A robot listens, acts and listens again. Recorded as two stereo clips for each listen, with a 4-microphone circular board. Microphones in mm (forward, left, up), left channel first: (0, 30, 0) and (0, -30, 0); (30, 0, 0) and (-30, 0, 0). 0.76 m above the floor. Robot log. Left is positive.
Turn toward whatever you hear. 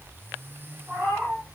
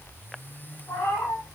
note: The cat meowing: 20° right.
cmd yaw -20
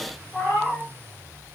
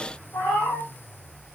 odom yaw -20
end: Found it: a cat meowing, straight ahead.